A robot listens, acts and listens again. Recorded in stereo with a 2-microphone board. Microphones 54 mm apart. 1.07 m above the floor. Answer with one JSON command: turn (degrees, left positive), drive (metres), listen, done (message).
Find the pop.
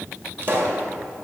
{"turn": -50}
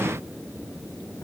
{"listen": true}
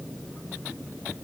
{"done": "I heard a pop, but can't make it out now. It was about straight ahead or 80° right."}